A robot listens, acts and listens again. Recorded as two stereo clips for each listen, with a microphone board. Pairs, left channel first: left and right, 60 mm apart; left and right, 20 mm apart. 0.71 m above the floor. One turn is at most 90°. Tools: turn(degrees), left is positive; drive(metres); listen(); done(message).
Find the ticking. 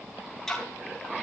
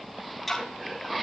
turn(degrees=30)
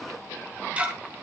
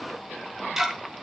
turn(degrees=-25)
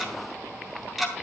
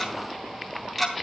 done("Facing the ticking, 2 to 4 m away.")